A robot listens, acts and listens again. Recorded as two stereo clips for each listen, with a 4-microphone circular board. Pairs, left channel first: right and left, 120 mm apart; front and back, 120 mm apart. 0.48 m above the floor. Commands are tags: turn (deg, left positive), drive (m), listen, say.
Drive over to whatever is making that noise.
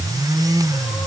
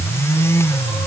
<listen/>
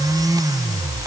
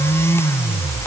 <listen/>
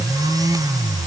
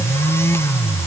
<say>I can't make out anything.</say>